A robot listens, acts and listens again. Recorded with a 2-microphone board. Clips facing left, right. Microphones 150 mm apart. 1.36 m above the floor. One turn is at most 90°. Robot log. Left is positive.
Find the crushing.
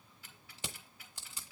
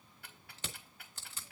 cmd yaw +30
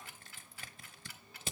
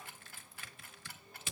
note: So it is at 140° left.
cmd yaw +90
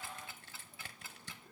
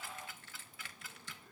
note: The crushing is now 40° left.
cmd yaw +40
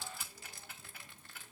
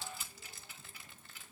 end: Found it: crushing, straight ahead.